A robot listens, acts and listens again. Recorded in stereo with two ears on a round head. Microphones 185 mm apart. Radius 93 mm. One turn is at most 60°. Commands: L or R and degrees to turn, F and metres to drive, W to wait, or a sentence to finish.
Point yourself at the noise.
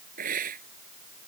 R45
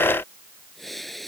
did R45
Found it: a hiss, straight ahead.